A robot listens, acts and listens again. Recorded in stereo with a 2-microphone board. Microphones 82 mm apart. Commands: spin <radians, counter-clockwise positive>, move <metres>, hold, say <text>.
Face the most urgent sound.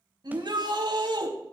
spin -1.05
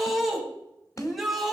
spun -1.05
say Found it: a shout, straight ahead.